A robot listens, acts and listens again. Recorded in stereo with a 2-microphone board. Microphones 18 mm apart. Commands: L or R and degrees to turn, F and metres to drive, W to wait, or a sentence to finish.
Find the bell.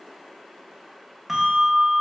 R20
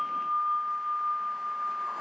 R145
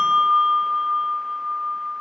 R45
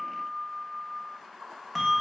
Found it: a bell, straight ahead, 1 to 2 m away.